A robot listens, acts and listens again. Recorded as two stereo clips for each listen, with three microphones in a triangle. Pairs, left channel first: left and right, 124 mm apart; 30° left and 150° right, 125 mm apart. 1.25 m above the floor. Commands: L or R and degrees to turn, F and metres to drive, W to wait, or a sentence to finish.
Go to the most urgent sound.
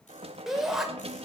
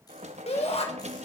F1.0
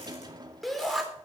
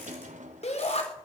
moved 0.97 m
F1.0
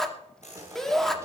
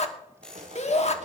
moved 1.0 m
F1.0
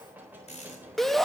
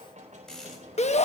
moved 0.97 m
F1.0
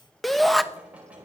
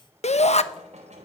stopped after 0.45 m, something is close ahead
Arrived at the shout, straight ahead.